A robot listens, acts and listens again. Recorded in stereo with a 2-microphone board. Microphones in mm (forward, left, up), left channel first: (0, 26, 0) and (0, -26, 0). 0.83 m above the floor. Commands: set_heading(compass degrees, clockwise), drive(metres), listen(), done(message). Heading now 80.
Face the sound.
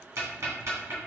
set_heading(150)
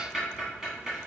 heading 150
set_heading(160)
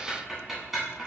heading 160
done("Found it: ticking, straight ahead.")